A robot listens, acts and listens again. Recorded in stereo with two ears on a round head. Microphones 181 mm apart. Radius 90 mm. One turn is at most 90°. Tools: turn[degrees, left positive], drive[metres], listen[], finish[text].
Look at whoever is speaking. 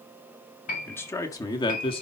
Thought: The man speaking: about 30° left or 150° left.
Action: turn[30]
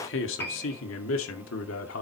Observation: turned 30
Thought: So it is at 100° left.
Action: turn[90]
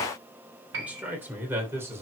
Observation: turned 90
Thought: The man speaking is now 15° right.
Action: turn[-15]
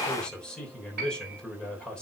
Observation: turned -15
Action: finish[Found it: a man speaking, straight ahead, 2 to 4 m away.]